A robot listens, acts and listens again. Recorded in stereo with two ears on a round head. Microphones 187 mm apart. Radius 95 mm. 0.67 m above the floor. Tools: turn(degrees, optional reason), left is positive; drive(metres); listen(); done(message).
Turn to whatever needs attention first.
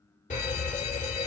turn(degrees=40, reason="The fire alarm: about 40° left or 140° left.")
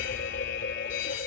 turn(degrees=90, reason="So it is at 90° left.")
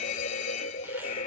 turn(degrees=40, reason="The fire alarm is now 40° left.")
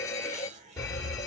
turn(degrees=20, reason="The fire alarm is now 20° left.")
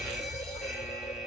done("Facing the fire alarm, 2 to 4 m away.")